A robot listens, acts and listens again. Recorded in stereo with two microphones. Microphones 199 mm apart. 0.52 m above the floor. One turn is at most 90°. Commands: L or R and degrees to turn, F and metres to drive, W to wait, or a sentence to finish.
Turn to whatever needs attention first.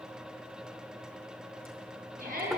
R40
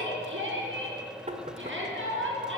R90
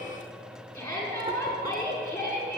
L10
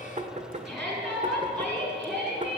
Found it: a shout, straight ahead.